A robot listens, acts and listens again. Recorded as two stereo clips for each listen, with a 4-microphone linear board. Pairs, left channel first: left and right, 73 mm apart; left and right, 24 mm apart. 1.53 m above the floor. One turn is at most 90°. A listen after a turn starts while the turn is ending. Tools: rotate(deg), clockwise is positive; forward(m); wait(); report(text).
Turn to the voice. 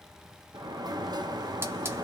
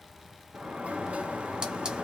wait()
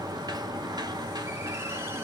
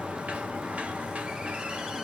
wait()
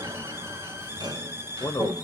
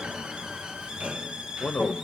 rotate(-55)
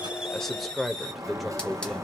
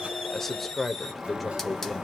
report("Facing the man speaking, under 1 m away.")